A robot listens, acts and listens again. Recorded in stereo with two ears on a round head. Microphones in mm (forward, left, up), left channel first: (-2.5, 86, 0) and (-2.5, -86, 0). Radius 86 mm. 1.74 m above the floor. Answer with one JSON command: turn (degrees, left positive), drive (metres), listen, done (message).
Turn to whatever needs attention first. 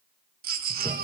{"turn": -50}
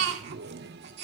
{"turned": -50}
{"turn": -75}
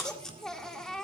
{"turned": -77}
{"done": "Facing the baby crying."}